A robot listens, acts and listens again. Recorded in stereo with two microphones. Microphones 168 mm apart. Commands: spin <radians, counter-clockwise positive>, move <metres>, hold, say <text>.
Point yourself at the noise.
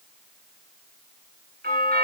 spin -1.05
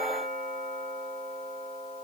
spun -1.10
spin -0.87
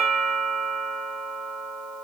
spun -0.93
say Found it: a doorbell, straight ahead, 2 to 4 m away.